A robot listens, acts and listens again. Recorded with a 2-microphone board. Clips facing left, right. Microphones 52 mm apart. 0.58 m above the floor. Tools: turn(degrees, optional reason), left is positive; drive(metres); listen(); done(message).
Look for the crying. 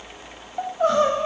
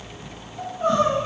turn(degrees=90)
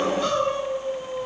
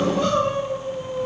done("Found it: crying, straight ahead.")